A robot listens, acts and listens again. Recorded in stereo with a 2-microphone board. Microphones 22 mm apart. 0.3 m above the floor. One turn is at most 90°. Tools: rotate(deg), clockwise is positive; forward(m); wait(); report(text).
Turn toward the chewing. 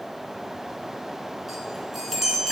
wait()
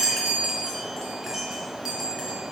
wait()
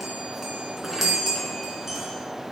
report("I can't make out chewing to turn to.")